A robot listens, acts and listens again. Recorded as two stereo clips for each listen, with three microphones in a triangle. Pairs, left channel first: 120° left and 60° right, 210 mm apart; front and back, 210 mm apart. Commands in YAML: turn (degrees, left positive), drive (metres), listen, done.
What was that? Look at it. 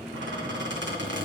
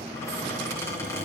turn: -80
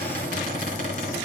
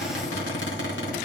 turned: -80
turn: -15
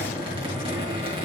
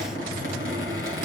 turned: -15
done: "Found it: a squeak, straight ahead, 2 to 4 m away."